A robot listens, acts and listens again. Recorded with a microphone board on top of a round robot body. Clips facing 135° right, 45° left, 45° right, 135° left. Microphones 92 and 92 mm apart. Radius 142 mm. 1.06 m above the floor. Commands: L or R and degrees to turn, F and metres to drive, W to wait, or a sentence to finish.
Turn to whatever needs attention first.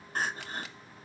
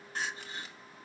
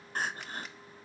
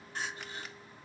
R90
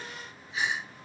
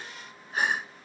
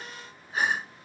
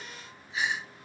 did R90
Found it: crying, straight ahead, 1 to 2 m away.